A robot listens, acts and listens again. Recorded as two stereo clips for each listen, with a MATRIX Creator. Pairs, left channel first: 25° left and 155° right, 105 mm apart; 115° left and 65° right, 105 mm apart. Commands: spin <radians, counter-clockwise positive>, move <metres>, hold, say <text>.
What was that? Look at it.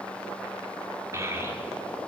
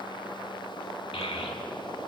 spin 2.53
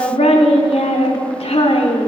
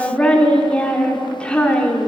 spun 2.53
spin 0.61
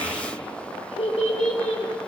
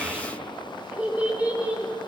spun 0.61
spin 0.17
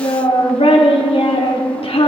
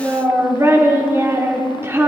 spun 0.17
say Found it: a child speaking, straight ahead.